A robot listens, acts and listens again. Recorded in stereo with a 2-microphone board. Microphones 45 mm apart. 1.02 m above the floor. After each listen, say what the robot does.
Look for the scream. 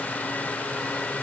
Keep listening.
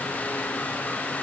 Keep listening.
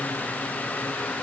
I can't make out a scream.